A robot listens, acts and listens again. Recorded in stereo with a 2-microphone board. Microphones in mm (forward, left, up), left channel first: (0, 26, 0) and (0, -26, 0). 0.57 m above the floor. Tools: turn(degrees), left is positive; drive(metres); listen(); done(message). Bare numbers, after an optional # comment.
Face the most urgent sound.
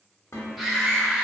turn(30)
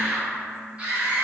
# So it is at 30° right.
turn(-30)
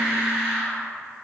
# The scream is now 25° right.
turn(-25)
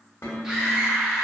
# The scream is now 10° right.
turn(-10)
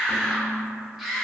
done("Facing the scream, 1 to 2 m away.")